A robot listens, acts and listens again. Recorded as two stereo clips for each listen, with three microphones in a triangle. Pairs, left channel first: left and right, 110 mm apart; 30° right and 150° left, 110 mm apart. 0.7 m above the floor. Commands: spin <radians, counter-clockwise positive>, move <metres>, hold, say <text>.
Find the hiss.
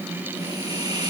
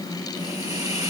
spin 1.83
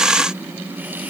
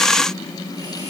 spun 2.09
spin -0.26
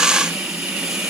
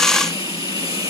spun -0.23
say Facing the hiss.